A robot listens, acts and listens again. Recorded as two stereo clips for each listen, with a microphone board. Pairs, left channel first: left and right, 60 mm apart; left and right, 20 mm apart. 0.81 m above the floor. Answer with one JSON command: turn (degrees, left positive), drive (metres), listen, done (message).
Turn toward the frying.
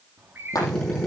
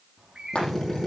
{"turn": 70}
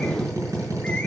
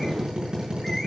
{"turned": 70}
{"listen": true}
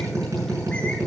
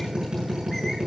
{"listen": true}
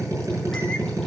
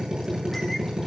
{"done": "I heard frying, but can't make it out now. It was about straight ahead or 40° left."}